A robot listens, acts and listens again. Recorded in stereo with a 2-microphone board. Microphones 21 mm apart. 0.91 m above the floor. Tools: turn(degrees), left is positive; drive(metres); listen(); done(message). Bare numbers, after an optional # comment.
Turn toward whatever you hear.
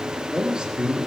# The man speaking: about 45° right or 135° right.
turn(-45)
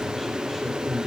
# So it is at 10° left.
turn(10)
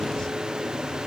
listen()
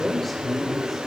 done("Found it: a man speaking, straight ahead.")